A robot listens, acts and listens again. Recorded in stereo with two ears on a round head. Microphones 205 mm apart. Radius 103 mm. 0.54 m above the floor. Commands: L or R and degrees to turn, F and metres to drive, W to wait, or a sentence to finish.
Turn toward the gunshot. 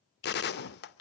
L45
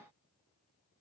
W
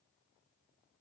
I heard a gunshot, but can't make it out now. It was about straight ahead or 90° left.